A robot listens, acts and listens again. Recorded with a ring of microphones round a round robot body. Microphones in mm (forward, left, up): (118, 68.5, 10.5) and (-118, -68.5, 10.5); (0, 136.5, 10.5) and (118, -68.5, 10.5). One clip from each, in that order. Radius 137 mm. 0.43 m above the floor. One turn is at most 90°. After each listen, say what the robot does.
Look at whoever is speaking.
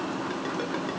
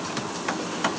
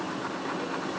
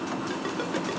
Keep listening.
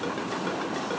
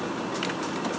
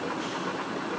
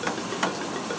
Keep listening.
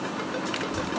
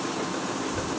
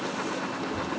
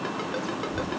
Turn 60° left.
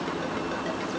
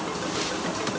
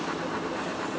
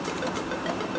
Keep listening.
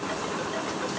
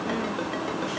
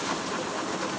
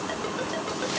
Keep listening.
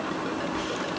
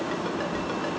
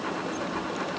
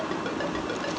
Turn 25° left.
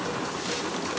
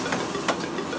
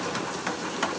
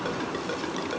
Keep listening.
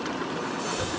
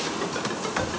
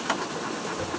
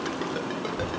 Facing the child speaking.